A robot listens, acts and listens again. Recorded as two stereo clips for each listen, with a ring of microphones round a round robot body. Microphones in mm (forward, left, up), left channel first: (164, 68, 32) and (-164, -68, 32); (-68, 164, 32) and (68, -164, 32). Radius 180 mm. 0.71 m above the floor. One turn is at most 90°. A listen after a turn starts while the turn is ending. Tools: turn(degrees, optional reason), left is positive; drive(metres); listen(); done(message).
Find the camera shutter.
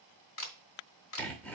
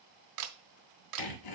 turn(degrees=-35, reason="The camera shutter: 35° right.")
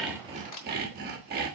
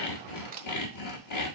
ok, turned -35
done("Facing the camera shutter.")